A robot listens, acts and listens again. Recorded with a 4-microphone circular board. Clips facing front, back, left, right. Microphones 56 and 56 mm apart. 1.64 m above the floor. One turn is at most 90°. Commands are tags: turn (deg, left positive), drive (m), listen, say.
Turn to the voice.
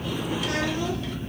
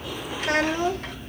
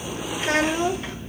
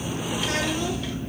<turn deg="90"/>
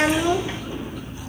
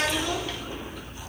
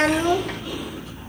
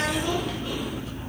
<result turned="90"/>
<turn deg="60"/>
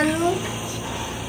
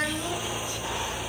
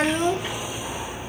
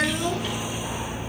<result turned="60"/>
<turn deg="35"/>
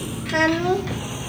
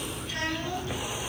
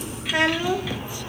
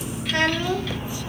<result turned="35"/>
<turn deg="10"/>
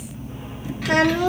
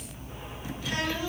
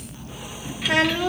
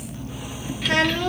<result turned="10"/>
<say>Found it: a child speaking, straight ahead.</say>